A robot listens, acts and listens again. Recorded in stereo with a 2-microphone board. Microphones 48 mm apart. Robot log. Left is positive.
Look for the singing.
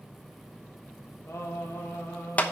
note: The singing: about 65° left or 115° left.
cmd yaw +65
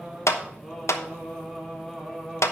end: Facing the singing.